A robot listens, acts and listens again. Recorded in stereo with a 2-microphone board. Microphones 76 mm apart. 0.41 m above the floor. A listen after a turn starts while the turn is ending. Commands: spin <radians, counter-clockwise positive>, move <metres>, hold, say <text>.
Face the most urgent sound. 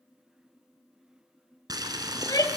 spin 0.96
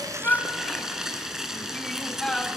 spin 0.17
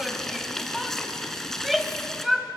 say Facing the shout, 1 to 2 m away.